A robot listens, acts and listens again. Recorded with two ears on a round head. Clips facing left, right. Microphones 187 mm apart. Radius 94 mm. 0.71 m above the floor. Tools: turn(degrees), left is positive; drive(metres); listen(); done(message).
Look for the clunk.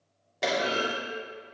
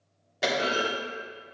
turn(degrees=-30)
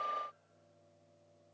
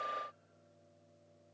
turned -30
listen()
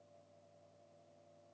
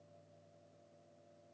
done("I heard a clunk, but can't make it out now. It was about 25° left or 145° right.")